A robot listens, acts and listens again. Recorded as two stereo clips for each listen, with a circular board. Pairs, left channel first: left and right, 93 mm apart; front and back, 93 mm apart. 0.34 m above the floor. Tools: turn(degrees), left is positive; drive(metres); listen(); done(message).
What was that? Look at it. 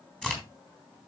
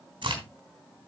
turn(degrees=170)
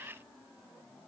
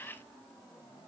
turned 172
done("I heard a crack from this way, but can't make it out now.")